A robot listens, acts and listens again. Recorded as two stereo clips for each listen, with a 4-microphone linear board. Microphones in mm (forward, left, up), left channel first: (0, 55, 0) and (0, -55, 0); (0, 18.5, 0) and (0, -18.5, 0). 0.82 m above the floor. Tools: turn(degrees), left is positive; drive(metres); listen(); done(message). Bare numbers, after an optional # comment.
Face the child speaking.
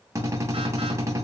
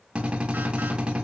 listen()
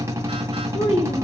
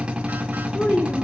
# The child speaking: about 70° left or 110° left.
turn(70)
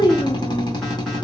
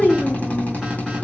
# So it is at 45° left.
turn(45)
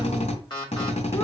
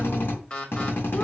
listen()
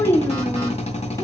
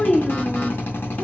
# The child speaking is now 25° left.
turn(25)
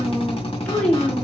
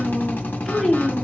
# The child speaking is now 10° left.
turn(10)
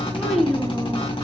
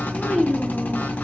done("Facing the child speaking.")